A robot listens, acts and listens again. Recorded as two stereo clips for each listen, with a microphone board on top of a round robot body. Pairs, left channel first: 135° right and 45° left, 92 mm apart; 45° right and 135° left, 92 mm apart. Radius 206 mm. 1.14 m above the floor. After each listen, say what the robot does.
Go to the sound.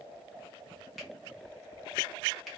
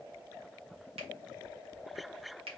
Turn 135° left.
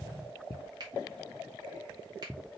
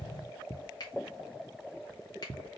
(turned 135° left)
Drive 1.0 m forward.
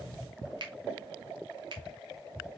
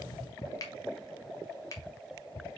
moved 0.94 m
Turn 10° left.
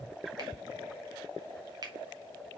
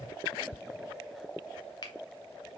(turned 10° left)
Drive 1.0 m forward.
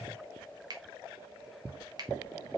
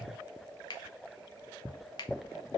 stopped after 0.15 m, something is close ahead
I am next to the finger snap.